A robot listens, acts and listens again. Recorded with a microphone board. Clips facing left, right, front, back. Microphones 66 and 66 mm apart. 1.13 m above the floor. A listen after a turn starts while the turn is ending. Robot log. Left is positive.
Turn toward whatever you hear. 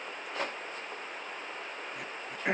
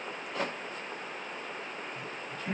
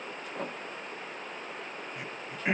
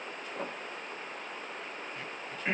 note: The throat clearing: 75° left.
cmd yaw +75
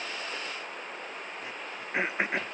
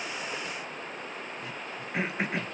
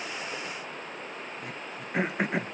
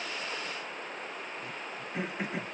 note: The throat clearing is now 25° left.
cmd yaw +25
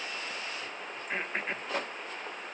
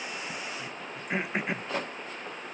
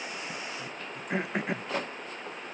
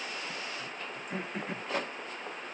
note: The throat clearing is now 10° right.
cmd yaw -10
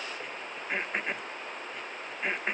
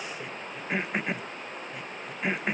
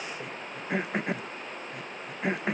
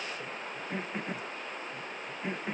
end: Facing the throat clearing, under 1 m away.